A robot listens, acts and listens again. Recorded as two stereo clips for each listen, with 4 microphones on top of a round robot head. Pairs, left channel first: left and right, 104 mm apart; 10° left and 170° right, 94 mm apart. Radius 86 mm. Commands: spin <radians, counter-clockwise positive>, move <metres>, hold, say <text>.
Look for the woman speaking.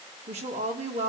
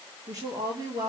spin -1.92
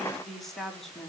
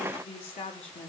say Facing the woman speaking, 2 to 4 m away.